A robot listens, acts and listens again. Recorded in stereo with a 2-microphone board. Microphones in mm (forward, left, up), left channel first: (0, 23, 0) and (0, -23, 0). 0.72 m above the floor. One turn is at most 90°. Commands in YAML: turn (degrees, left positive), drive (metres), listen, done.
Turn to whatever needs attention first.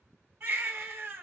turn: -45
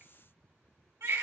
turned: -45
turn: -90
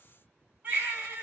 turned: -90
turn: -30
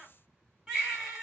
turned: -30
done: "Found it: a baby crying, straight ahead."